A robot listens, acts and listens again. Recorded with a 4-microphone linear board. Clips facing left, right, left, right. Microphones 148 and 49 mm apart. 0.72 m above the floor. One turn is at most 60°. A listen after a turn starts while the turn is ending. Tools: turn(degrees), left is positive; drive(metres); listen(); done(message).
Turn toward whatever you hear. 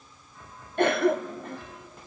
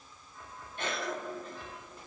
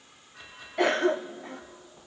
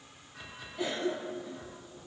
turn(degrees=60)
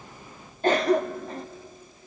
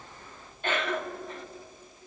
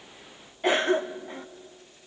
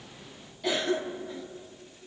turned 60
turn(degrees=40)
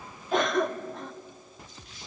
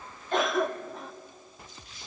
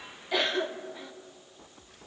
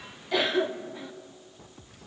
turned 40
done("Facing the cough.")